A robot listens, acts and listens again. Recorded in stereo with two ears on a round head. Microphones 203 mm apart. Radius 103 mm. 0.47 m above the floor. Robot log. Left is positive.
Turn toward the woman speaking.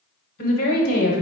note: The woman speaking: about 40° left or 140° left.
cmd yaw +40
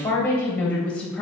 end: Found it: a woman speaking, straight ahead, 2 to 4 m away.